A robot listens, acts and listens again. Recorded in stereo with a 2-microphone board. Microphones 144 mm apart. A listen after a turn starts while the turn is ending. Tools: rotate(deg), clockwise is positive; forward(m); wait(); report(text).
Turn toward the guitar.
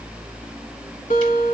rotate(-70)
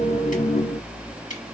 wait()
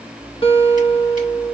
rotate(-40)
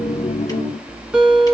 rotate(10)
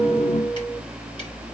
report("Found it: a guitar, straight ahead, 1 to 2 m away.")